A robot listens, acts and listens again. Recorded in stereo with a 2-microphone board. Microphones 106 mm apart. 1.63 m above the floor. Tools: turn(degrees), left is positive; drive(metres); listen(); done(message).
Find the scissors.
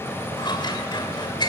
turn(degrees=45)
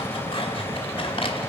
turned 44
turn(degrees=80)
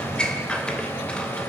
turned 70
turn(degrees=10)
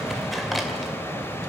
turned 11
listen()
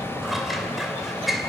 done("Facing the scissors, 2 to 4 m away.")